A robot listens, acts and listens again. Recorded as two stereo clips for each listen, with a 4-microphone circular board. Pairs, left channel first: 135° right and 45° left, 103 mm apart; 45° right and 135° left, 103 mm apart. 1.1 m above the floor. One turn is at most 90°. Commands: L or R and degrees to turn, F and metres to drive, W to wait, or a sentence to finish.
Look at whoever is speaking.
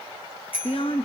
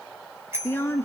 R90
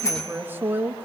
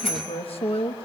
R25
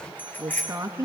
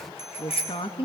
R10
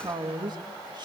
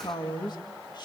Facing the woman speaking.